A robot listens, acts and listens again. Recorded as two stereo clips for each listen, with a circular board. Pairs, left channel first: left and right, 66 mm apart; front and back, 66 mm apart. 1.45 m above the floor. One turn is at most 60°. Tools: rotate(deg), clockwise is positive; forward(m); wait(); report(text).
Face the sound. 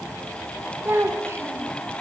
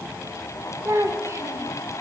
rotate(60)
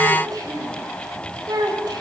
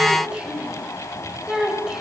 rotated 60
rotate(60)
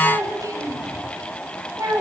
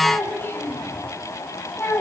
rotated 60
rotate(55)
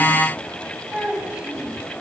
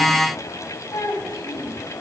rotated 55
rotate(20)
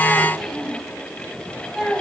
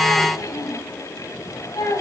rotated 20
report("Found it: a child speaking, straight ahead, over 4 m away.")